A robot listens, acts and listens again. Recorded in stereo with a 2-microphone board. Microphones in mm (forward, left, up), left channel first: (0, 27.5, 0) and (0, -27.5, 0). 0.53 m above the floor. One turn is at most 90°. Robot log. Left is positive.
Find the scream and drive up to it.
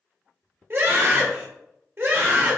note: The scream: about 45° right or 135° right.
cmd yaw -45
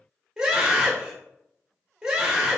note: So it is at 15° right.
cmd yaw -15
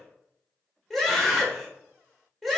cmd fwd 1.0
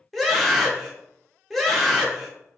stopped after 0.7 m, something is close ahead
end: Arrived at the scream, straight ahead.